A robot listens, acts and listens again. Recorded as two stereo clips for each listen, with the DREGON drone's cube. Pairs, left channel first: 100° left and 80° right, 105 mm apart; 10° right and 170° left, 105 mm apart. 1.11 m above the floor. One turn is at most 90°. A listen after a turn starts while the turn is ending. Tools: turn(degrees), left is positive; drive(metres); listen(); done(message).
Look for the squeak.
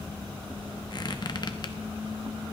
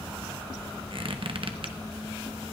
turn(degrees=90)
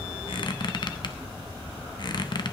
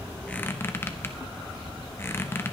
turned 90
turn(degrees=55)
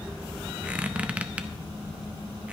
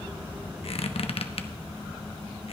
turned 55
done("Found it: a squeak, straight ahead.")